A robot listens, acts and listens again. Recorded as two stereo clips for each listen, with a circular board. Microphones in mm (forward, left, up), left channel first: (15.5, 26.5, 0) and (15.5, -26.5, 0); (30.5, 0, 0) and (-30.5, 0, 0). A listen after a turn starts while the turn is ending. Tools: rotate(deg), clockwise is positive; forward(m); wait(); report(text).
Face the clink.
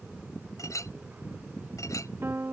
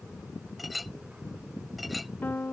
rotate(-90)
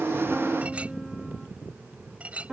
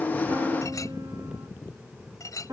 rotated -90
rotate(25)
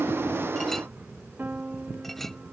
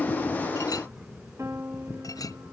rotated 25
wait()
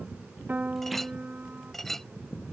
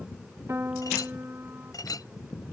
report("Facing the clink.")